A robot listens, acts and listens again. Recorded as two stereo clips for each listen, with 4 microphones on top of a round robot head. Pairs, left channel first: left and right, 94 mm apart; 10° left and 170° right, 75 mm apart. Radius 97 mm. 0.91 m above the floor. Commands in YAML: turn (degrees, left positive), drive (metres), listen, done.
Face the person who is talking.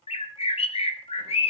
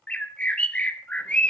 listen: true
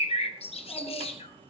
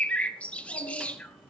turn: 15
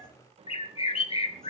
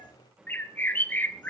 listen: true
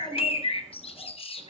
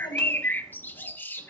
done: "Found it: a child speaking, straight ahead."